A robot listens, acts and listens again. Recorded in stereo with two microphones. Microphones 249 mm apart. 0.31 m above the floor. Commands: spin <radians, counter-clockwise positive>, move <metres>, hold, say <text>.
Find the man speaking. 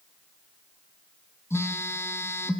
hold
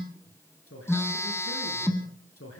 spin 1.22
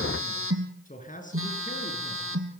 spin 0.52
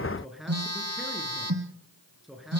say Found it: a man speaking, straight ahead, over 4 m away.